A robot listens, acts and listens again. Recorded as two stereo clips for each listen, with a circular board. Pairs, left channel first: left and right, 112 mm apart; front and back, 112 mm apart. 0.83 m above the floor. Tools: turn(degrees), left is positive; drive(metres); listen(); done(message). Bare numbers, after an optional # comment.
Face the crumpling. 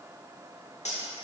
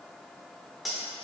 listen()
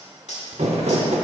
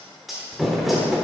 # The crumpling: 90° right.
turn(-90)
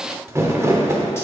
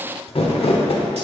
# The crumpling is now 25° right.
turn(-25)
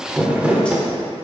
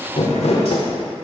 # The crumpling is now 10° right.
turn(-10)
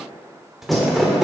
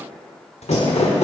done("Facing the crumpling.")